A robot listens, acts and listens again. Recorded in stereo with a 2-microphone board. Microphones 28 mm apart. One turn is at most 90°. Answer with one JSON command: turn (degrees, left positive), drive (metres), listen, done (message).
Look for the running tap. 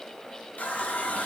{"turn": 75}
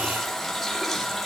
{"done": "Facing the running tap."}